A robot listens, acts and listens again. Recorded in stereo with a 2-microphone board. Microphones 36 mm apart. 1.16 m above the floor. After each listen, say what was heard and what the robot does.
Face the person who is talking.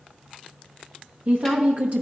The woman speaking: about 50° right or 130° right. Turn 50° right.
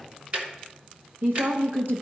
So it is at 80° right. Turn 80° right.
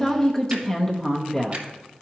The woman speaking is now 20° left. Turn 20° left.
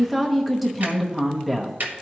Facing the woman speaking.